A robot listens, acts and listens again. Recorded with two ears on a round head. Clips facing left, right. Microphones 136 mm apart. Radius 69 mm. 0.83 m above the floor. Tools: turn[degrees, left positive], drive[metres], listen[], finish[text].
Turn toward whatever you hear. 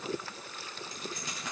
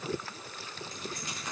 Thought: The keys jangling: about 70° left or 110° left.
Action: turn[70]
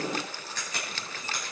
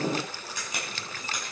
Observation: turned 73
Thought: So it is at 15° right.
Action: turn[-15]
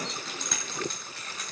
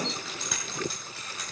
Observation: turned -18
Thought: The keys jangling is now 10° right.
Action: turn[-10]
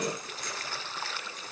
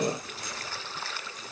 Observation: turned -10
Action: listen[]
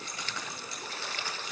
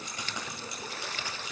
Thought: The keys jangling is now 15° right.
Action: turn[-15]
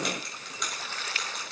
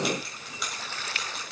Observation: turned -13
Action: finish[Found it: keys jangling, straight ahead.]